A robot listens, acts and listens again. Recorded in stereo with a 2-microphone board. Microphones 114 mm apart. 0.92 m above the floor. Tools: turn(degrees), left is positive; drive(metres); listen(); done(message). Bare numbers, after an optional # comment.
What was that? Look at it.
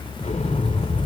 turn(90)
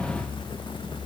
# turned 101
# Nothing new. It was at 10° right.
turn(-10)
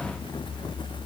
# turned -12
done("I heard an explosion from this way, but can't make it out now.")